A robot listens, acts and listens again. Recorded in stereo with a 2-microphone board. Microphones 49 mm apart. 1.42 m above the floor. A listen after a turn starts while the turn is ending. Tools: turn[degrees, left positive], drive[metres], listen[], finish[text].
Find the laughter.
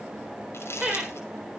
Action: turn[-30]
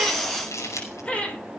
Thought: So it is at 25° left.
Action: turn[25]
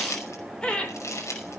Thought: The laughter is now 20° left.
Action: turn[20]
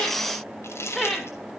Thought: The laughter is now 10° left.
Action: turn[10]
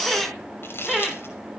Action: finish[Found it: laughter, straight ahead, over 4 m away.]